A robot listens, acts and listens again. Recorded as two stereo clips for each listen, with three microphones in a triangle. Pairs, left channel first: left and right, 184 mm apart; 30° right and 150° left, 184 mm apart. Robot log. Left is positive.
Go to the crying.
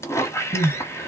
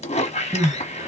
note: The crying: 80° left.
cmd yaw +80
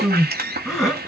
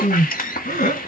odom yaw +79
cmd fwd 1.0
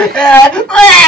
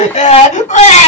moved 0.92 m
cmd fwd 1.0
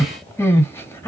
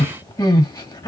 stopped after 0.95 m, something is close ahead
note: The crying is now 20° left.
cmd yaw +20
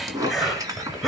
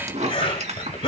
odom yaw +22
end: I am next to the crying.